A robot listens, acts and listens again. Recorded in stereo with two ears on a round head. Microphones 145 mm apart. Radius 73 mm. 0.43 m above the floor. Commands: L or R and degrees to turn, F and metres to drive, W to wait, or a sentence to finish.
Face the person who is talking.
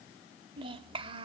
R35
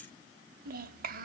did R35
R105
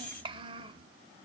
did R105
R35
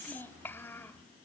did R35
L15
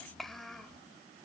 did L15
Found it: a child speaking, straight ahead.